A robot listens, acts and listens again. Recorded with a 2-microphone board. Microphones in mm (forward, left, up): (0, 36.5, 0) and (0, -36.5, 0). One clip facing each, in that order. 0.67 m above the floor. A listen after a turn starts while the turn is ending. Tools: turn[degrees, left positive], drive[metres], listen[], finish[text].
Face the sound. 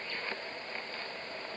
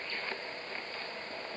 Action: listen[]
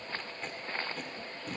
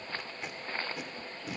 Action: turn[-30]
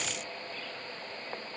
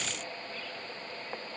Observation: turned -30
Action: listen[]
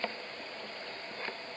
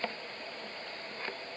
Action: listen[]
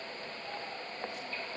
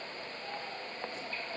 Action: finish[I heard tape being pulled, but can't make it out now. It was about 20° left or 140° right.]